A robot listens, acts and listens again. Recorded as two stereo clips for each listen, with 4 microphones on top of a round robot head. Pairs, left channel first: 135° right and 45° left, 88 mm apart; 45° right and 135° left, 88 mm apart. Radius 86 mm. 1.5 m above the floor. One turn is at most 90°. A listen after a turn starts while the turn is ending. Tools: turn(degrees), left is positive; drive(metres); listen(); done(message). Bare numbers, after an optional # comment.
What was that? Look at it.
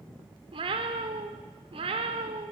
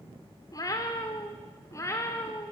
# The cat meowing: 20° left.
turn(20)
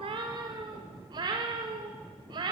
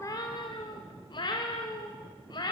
done("Facing the cat meowing, 2 to 4 m away.")